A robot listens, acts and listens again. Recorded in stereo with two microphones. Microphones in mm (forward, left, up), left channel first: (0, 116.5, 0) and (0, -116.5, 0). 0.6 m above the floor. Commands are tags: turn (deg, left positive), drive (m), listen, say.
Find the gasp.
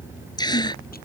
<turn deg="20"/>
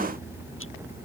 <listen/>
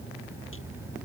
<say>I heard a gasp, but can't make it out now. It was about straight ahead or 140° left.</say>